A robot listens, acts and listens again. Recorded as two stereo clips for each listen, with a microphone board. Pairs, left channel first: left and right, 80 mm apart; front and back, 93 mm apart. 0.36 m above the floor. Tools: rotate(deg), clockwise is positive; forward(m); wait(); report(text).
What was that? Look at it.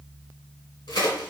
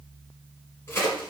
rotate(-65)
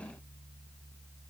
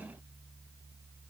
report("I heard a crack from this way, but can't make it out now.")